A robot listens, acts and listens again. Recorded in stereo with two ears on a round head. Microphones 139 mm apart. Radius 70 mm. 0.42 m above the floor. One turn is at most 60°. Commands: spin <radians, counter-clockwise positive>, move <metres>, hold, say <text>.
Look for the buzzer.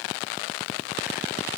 hold
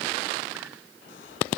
hold
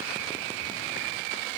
say I can't make out a buzzer to turn to.